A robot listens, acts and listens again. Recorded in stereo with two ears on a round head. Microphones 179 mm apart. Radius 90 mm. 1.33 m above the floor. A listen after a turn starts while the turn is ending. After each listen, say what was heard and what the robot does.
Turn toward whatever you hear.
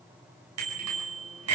Turn 90° right.
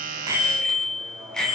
Found it: a bicycle bell, straight ahead, over 4 m away.